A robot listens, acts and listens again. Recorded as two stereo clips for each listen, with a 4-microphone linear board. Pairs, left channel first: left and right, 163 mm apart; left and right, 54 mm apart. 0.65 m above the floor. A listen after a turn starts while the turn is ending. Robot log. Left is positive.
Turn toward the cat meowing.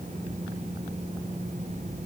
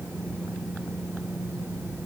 cmd idle
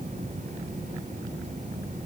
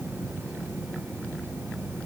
cmd idle
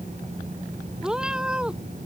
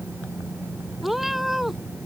cmd yaw -30
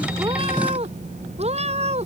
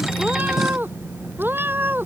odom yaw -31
note: So it is at 140° right.
cmd yaw -140
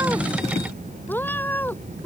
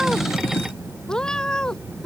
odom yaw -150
note: The cat meowing is now 10° left.
cmd yaw +10
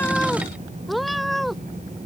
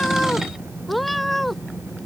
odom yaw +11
end: Found it: a cat meowing, straight ahead.